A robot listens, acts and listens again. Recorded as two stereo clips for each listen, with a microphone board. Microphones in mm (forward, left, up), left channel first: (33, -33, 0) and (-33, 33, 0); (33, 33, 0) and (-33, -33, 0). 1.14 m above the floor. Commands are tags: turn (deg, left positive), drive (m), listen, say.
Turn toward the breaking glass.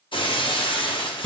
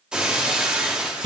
<turn deg="-55"/>
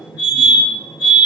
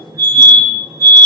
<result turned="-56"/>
<say>Facing where the breaking glass came from. I can't hear it now.</say>